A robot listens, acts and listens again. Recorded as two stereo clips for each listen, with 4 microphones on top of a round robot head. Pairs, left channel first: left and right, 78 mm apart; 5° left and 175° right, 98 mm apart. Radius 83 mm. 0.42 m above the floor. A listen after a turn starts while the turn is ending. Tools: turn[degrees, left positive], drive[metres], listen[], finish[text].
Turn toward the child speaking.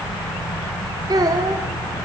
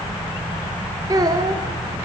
Thought: The child speaking: 130° right.
Action: turn[-130]
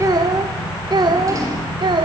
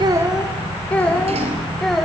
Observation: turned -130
Thought: The child speaking is now 85° right.
Action: turn[-85]
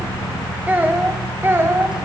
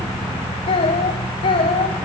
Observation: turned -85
Thought: The child speaking is now 30° right.
Action: turn[-30]
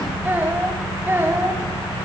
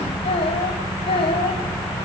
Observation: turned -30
Thought: The child speaking is now 25° right.
Action: turn[-25]
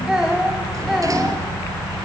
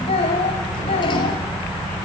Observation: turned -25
Action: finish[Facing the child speaking, 2 to 4 m away.]